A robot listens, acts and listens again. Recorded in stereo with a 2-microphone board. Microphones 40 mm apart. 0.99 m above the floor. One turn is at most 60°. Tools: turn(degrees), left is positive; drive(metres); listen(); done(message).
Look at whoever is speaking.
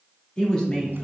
turn(degrees=20)
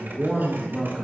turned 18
turn(degrees=30)
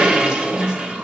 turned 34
turn(degrees=-25)
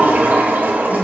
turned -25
listen()
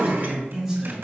done("Found it: a man speaking, straight ahead, over 4 m away.")